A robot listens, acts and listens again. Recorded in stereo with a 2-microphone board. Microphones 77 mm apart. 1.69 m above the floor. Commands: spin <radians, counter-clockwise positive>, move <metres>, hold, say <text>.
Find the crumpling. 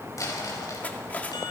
spin 0.79
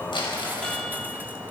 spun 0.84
spin 1.48
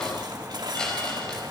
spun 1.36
spin 0.17
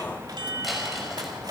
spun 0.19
hold
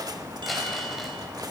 say I heard crumpling from this way, but can't make it out now.